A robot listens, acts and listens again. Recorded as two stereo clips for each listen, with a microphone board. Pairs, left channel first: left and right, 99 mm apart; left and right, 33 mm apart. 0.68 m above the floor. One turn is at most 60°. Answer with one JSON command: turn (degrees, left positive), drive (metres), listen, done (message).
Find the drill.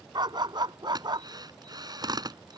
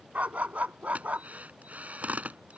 {"turn": -45}
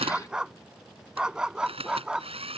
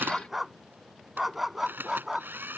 {"turn": -60}
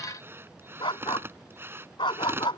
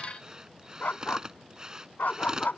{"turn": -25}
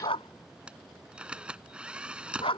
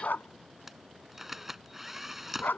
{"turn": -10}
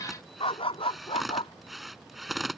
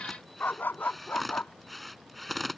{"done": "Facing the drill."}